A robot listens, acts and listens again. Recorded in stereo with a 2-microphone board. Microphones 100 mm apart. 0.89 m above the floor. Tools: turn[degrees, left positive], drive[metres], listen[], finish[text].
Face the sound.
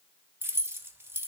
Thought: The keys jangling: about 25° right or 155° right.
Action: turn[-25]
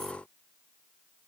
Action: listen[]
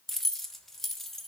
Action: finish[Found it: keys jangling, straight ahead.]